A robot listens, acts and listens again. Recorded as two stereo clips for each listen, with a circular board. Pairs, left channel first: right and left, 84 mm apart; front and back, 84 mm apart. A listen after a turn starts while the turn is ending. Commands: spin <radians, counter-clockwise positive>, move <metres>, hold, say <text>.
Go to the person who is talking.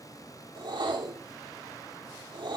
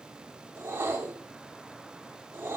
hold
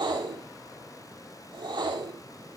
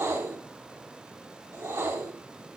hold
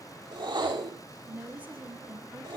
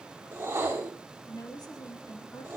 spin 0.44
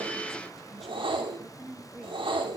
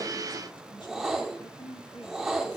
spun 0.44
move 1.0
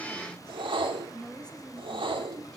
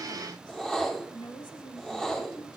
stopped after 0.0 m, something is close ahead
spin -0.17
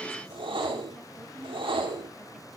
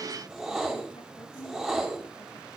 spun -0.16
hold
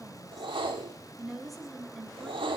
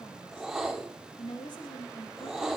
say Blocked. The woman speaking is further on, straight ahead.